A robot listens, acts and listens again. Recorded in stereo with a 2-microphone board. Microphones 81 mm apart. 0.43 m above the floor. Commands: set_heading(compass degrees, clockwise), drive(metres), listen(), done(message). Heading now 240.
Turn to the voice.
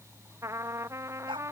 listen()
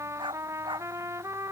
listen()
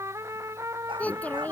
set_heading(220)
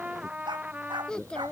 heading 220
set_heading(190)
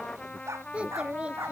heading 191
set_heading(206)
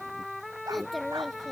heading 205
done("Found it: a child speaking, straight ahead.")